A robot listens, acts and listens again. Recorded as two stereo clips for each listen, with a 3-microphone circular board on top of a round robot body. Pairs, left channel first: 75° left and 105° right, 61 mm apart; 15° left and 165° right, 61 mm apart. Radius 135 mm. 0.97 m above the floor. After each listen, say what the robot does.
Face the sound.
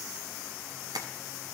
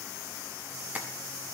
Turn 100° right.
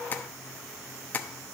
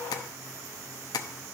Turn 10° left.
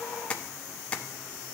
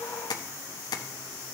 Facing the tapping.